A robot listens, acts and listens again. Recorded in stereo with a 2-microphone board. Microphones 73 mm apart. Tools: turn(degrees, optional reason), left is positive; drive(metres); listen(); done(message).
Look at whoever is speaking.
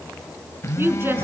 turn(degrees=-30, reason="The woman speaking: about 30° right or 150° right.")
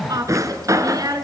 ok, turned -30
turn(degrees=-125, reason="So it is at 125° right.")
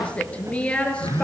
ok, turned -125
turn(degrees=15, reason="The woman speaking is now 15° left.")
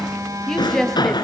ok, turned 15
done("Found it: a woman speaking, straight ahead.")